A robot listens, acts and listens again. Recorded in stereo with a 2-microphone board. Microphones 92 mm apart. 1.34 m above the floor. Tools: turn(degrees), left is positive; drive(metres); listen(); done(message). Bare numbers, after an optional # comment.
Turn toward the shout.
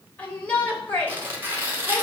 turn(30)
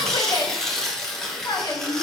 # So it is at 135° left.
turn(135)
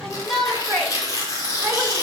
done("Found it: a shout, straight ahead, over 4 m away.")